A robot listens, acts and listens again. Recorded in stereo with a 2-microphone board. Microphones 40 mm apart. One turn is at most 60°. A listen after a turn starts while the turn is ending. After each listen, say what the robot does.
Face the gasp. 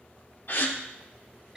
Turn 55° left.
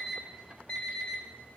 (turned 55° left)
Keep listening.
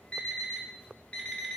I heard a gasp, but can't make it out now. It was about straight ahead or 70° left.